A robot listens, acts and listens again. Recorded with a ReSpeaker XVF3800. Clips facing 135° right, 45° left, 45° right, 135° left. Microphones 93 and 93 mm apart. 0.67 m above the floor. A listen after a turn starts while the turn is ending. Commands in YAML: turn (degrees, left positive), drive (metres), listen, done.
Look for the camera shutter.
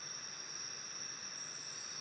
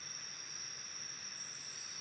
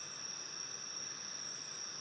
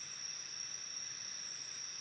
listen: true
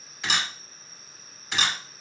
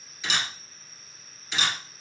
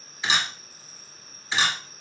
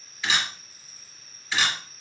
turn: -115
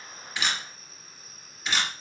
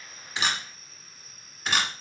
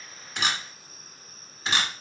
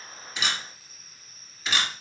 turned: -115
done: "Found it: a camera shutter, straight ahead, 1 to 2 m away."